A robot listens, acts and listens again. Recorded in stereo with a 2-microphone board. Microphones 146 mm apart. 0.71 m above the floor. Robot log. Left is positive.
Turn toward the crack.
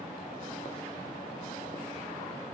cmd idle
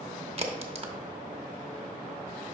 note: The crack: about 40° right or 140° right.
cmd yaw -40
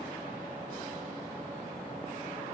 cmd idle
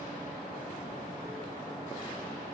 end: I heard a crack, but can't make it out now. It was about straight ahead or 100° right.